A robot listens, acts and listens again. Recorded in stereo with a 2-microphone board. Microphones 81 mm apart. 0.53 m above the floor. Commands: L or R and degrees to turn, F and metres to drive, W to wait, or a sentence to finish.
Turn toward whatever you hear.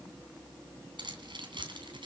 R90
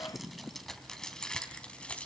L15
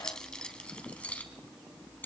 L25
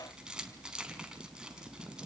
R10
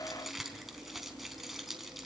Facing the keys jangling, 2 to 4 m away.